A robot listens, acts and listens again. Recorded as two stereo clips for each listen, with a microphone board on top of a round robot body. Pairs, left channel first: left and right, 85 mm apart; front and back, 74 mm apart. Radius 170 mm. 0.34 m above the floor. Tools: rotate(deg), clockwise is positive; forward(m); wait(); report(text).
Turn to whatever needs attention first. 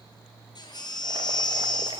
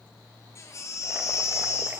rotate(-50)
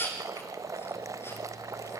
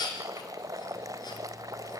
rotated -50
rotate(-25)
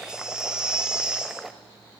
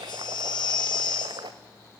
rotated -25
rotate(10)
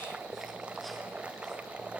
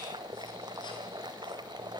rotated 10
wait()
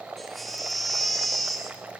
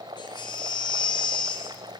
report("Found it: a baby crying, straight ahead.")